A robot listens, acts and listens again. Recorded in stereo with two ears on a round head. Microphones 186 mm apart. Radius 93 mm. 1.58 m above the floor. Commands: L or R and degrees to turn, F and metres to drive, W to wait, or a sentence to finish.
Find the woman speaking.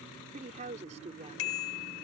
R30
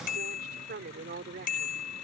R135
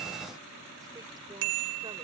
W
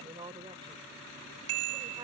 R25
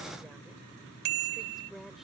W
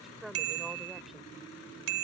Found it: a woman speaking, straight ahead.